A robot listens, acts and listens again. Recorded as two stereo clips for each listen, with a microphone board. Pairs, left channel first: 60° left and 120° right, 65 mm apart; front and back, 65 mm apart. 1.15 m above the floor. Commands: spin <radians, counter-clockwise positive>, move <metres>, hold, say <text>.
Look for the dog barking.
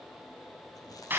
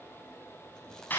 hold
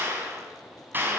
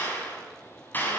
hold
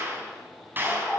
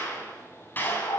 spin -0.26
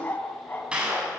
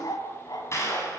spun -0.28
say Facing the dog barking.